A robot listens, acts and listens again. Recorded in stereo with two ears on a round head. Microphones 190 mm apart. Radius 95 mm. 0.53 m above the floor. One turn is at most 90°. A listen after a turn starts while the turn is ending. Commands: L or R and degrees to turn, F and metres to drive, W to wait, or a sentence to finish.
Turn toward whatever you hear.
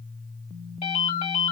L30
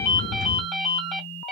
Facing the ringtone, 1 to 2 m away.